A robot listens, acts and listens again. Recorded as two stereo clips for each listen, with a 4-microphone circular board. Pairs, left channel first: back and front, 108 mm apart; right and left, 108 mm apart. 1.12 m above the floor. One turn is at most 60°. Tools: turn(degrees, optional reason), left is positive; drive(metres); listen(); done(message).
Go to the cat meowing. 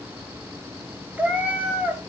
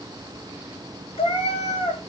turn(degrees=-60, reason="The cat meowing: 75° right.")
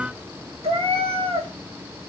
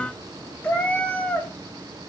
turn(degrees=-15, reason="The cat meowing is now 15° right.")
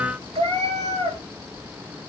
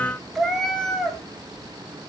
drive(metres=1.0)
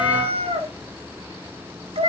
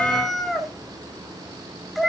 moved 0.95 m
drive(metres=1.0)
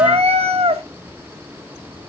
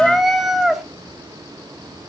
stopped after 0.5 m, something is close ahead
done("I am next to the cat meowing.")